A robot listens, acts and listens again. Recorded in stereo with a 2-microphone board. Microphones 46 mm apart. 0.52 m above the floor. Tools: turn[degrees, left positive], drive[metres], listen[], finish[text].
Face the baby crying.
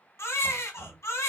Action: turn[90]
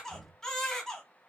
Thought: So it is at 10° left.
Action: turn[10]
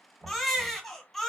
Action: finish[Found it: a baby crying, straight ahead, 1 to 2 m away.]